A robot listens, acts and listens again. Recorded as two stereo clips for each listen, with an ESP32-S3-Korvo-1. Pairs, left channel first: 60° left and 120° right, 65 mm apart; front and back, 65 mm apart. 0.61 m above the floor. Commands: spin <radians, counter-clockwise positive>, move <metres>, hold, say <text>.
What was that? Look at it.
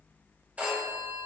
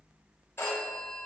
spin -0.96
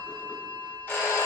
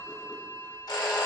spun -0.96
say Facing the phone ringing, 1 to 2 m away.